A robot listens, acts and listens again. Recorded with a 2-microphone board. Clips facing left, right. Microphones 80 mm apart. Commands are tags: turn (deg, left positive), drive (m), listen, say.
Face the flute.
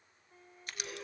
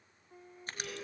<turn deg="-30"/>
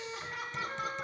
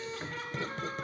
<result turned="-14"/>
<say>Facing the flute.</say>